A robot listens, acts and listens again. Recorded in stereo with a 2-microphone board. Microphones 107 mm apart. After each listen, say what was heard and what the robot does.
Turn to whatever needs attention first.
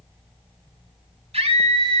The scream: about 75° right or 105° right. Turn 75° right.
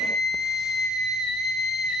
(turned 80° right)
Found it: a scream, straight ahead.